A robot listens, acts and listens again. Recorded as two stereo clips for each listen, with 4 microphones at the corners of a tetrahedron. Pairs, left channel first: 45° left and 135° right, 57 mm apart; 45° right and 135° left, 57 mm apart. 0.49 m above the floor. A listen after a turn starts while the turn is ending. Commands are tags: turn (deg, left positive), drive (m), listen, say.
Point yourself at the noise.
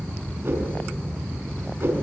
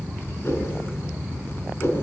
<turn deg="-90"/>
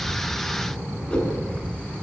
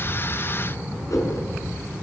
<turn deg="-25"/>
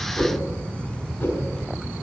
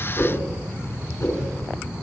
<turn deg="-10"/>
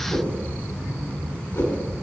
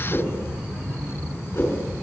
<say>Facing the whoosh, over 4 m away.</say>